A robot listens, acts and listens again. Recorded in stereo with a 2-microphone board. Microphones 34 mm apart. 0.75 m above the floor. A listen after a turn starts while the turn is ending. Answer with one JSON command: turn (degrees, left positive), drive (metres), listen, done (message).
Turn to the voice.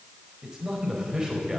{"turn": -20}
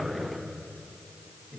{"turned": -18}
{"done": "Found it: a man speaking, straight ahead, over 4 m away."}